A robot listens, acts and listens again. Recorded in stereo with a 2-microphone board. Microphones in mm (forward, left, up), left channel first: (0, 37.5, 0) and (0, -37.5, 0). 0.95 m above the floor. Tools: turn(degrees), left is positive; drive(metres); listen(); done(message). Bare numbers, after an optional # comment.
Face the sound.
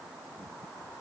listen()
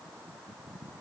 listen()
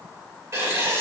# The writing: about 40° right or 140° right.
turn(-40)
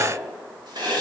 # So it is at 100° right.
turn(-100)
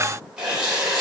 # The writing is now 10° right.
turn(-10)
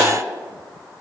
listen()
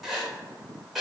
done("Facing the writing, 2 to 4 m away.")